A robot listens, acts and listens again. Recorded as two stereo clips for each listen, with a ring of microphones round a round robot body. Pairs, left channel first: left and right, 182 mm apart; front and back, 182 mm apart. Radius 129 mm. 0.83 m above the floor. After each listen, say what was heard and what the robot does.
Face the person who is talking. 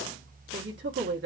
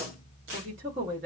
The woman speaking: 125° right. Turn 125° right.
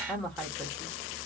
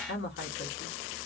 Found it: a woman speaking, straight ahead.